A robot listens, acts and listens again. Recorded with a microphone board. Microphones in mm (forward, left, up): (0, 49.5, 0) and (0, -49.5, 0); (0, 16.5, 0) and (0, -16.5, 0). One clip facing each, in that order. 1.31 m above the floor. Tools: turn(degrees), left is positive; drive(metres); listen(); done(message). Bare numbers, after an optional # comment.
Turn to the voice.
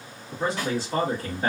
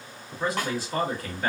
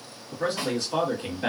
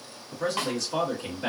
# The man speaking: about 25° left or 155° left.
turn(25)
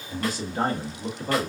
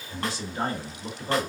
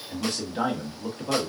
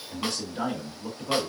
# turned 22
# So it is at 130° left.
turn(130)
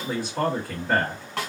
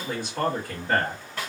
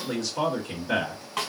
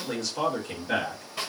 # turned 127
done("Facing the man speaking.")